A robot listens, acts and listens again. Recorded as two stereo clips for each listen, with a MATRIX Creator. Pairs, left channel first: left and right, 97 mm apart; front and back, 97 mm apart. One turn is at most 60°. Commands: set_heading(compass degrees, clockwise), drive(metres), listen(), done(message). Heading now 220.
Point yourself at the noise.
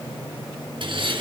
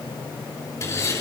set_heading(280)
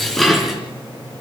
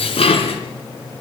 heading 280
done("Facing the dishes clattering.")